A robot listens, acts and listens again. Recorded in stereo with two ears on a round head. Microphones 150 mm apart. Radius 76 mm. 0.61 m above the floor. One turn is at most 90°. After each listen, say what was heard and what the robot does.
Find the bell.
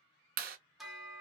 Turn 30° left.
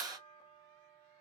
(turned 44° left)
So it is at 135° left. Turn 90° left.
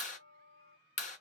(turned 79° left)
The bell is now 60° left. Turn 60° left.
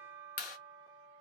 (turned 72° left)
The bell is now 15° right. Turn 15° right.
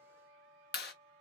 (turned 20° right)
Facing the bell.